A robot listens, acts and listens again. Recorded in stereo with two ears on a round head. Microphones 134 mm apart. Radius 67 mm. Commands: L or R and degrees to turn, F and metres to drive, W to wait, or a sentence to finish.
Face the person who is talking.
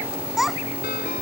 L30
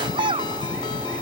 R35
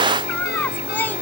L10
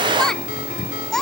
Found it: a child speaking, straight ahead.